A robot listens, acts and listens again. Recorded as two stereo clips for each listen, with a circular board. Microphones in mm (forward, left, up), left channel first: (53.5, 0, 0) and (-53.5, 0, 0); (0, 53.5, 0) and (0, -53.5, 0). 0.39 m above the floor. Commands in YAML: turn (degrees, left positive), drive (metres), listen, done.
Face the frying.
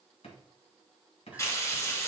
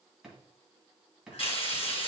turn: 60
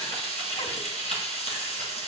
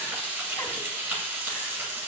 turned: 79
turn: -20
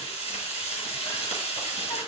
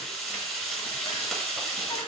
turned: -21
done: "Facing the frying."